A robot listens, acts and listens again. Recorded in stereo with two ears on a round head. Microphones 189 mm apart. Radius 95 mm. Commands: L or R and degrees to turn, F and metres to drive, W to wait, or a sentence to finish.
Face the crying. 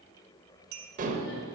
W
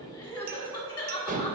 L20
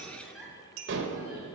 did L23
Found it: crying, straight ahead.